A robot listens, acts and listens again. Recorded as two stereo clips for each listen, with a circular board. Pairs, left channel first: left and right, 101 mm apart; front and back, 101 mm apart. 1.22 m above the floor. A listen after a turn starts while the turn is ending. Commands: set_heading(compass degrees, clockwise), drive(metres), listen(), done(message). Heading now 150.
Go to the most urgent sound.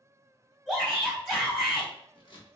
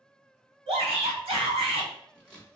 set_heading(330)
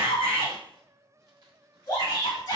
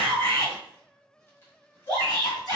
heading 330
set_heading(285)
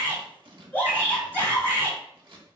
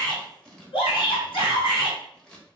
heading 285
set_heading(265)
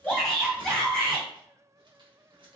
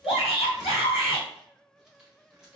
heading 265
drive(1.0)
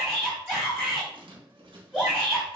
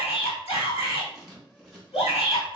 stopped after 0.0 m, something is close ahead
set_heading(255)
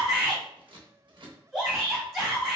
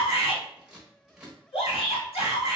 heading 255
done("Blocked. The shout is further on, straight ahead.")